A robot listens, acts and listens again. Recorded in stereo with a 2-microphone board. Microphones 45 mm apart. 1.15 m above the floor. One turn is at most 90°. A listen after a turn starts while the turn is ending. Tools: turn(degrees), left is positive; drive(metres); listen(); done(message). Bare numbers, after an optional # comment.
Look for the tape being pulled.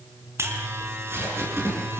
# The tape being pulled: about 65° right or 115° right.
turn(-65)
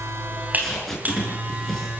done("Facing the tape being pulled, over 4 m away.")